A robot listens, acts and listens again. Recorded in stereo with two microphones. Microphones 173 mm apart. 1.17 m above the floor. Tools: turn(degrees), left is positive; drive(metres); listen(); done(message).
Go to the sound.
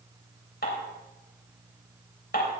turn(degrees=65)
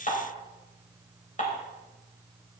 turn(degrees=45)
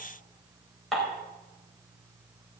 drive(metres=1.0)
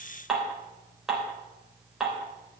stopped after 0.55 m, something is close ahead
done("Blocked. The dishes clattering is further on, straight ahead.")